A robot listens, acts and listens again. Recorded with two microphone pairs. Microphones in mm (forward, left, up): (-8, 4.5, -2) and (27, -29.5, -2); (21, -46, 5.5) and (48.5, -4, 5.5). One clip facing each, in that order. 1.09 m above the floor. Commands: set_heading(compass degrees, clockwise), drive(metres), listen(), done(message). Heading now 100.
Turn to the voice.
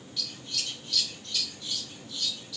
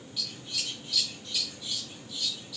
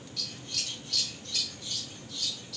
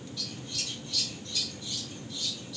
listen()
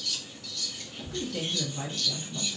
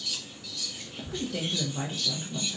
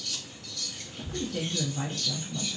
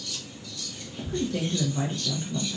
set_heading(90)
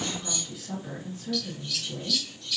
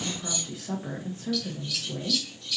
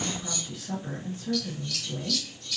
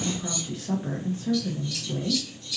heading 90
done("Found it: a woman speaking, straight ahead, under 1 m away.")